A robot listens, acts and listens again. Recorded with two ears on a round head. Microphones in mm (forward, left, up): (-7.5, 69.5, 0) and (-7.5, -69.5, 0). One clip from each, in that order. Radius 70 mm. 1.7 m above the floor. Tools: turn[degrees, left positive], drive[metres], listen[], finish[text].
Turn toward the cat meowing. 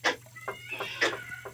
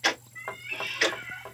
Thought: The cat meowing: about 45° right or 135° right.
Action: turn[-45]
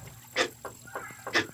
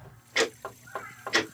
Action: listen[]
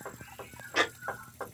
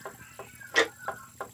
Thought: So it is at 15° right.
Action: turn[-15]
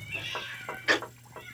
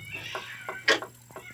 Action: finish[Facing the cat meowing, 1 to 2 m away.]